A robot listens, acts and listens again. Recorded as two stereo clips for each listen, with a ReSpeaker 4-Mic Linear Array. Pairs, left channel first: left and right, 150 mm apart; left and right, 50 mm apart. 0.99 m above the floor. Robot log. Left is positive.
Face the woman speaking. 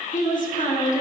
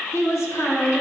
note: The woman speaking: about 60° left or 120° left.
cmd yaw +60
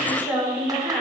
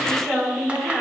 end: Facing the woman speaking, 2 to 4 m away.